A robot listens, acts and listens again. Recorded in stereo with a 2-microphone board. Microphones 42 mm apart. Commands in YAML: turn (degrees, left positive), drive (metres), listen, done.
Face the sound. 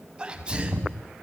turn: -20
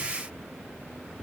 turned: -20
listen: true
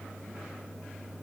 done: "I heard a sneeze, but can't make it out now. It was about straight ahead or 140° right."